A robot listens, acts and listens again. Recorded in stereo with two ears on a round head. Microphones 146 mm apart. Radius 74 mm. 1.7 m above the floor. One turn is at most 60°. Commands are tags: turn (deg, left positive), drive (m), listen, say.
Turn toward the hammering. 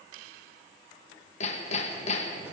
<turn deg="45"/>
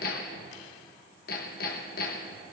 <turn deg="60"/>
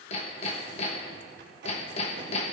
<turn deg="45"/>
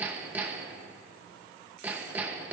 <turn deg="-10"/>
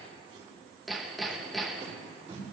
<say>Facing the hammering.</say>